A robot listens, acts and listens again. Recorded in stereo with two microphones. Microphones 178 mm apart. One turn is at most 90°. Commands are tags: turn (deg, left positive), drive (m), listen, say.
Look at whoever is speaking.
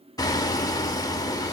<listen/>
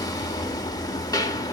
<listen/>
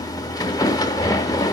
<say>I can't make out anyone speaking to turn to.</say>